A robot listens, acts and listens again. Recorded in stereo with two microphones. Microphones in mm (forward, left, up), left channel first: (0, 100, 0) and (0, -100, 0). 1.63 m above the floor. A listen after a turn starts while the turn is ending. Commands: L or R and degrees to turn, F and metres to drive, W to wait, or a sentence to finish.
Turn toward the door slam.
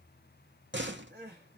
R65
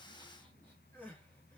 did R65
W
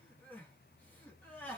I heard a door slam, but can't make it out now. It was about straight ahead or 50° right.